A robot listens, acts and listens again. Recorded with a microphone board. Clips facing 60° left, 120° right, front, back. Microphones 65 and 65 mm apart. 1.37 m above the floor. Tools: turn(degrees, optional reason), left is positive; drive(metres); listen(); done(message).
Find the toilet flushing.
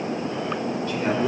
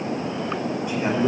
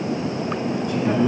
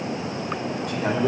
listen()
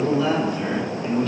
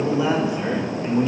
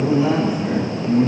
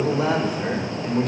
listen()
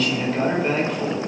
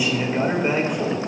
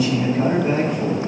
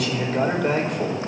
done("I can't make out a toilet flushing to turn to.")